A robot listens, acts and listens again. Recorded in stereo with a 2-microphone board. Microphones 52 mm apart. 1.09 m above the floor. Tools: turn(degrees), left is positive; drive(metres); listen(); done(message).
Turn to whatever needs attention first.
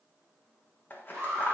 turn(degrees=-35)
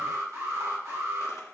turn(degrees=-105)
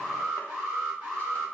turn(degrees=-30)
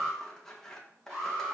turn(degrees=-10)
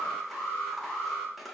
done("Facing the alarm, 2 to 4 m away.")